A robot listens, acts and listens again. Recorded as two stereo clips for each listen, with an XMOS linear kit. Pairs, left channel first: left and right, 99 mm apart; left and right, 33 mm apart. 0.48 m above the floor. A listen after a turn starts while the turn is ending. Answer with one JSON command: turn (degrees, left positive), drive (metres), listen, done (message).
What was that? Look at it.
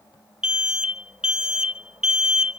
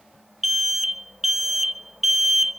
{"turn": -30}
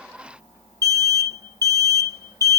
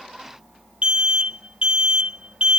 {"turn": -140}
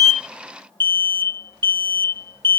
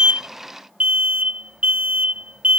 {"turn": -55}
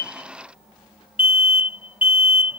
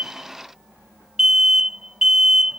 {"turn": -20}
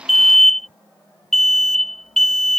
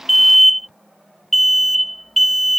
{"done": "Found it: an alarm, straight ahead."}